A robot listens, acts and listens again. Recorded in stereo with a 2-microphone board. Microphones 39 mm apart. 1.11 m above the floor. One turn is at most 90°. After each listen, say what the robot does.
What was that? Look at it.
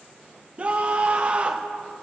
Turn 35° right.
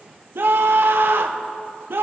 Turn 90° right.
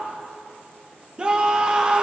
Turn 25° right.
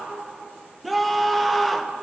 Found it: a scream, straight ahead.